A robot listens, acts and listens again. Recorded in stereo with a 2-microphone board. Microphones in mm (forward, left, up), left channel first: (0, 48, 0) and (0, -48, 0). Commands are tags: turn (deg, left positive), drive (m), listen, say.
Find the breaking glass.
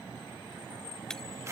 <turn deg="30"/>
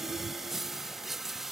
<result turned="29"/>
<listen/>
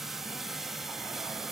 <say>I heard breaking glass, but can't make it out now. It was about 20° right or 145° left.</say>